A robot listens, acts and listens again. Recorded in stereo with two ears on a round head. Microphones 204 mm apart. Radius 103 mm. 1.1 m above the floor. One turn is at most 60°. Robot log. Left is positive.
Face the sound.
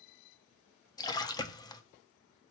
note: The splash: about 15° left or 165° left.
cmd yaw +15
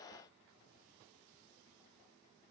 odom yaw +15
cmd idle
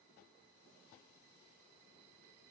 end: I heard a splash, but can't make it out now. It was about straight ahead or 150° left.